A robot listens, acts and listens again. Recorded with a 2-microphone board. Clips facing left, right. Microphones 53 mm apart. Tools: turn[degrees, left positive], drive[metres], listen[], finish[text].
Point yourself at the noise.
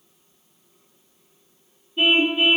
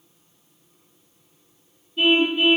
Thought: The car horn: about 15° left or 165° left.
Action: turn[15]
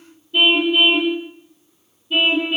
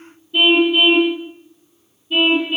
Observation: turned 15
Action: finish[Found it: a car horn, straight ahead.]